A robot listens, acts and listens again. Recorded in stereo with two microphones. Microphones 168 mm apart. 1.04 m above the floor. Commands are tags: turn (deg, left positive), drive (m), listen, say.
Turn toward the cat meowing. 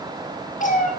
<turn deg="50"/>
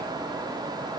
<listen/>
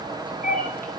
<turn deg="55"/>
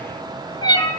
<turn deg="25"/>
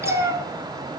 <turn deg="-20"/>
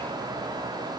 <listen/>
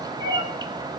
<turn deg="-25"/>
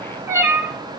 <turn deg="-15"/>
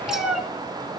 <say>Found it: a cat meowing, straight ahead.</say>